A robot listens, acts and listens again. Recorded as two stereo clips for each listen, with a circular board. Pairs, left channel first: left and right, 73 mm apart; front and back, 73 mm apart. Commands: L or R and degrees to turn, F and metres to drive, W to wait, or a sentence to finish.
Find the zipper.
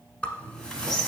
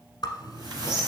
L15
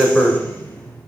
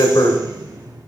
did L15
Facing the zipper, 1 to 2 m away.